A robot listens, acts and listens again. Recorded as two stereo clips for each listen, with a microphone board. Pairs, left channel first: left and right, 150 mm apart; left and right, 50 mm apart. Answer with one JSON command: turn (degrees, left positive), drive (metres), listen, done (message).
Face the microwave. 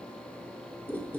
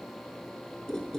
{"listen": true}
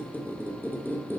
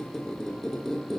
{"listen": true}
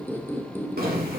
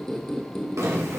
{"turn": -75}
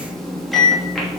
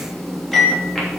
{"done": "Found it: a microwave, straight ahead, 2 to 4 m away."}